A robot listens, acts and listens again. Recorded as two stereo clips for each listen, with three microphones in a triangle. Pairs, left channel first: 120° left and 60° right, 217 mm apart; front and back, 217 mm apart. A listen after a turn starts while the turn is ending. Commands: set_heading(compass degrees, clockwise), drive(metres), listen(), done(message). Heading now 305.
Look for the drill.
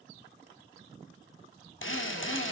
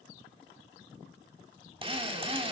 set_heading(185)
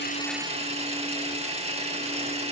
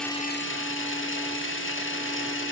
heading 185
done("Found it: a drill, straight ahead, 1 to 2 m away.")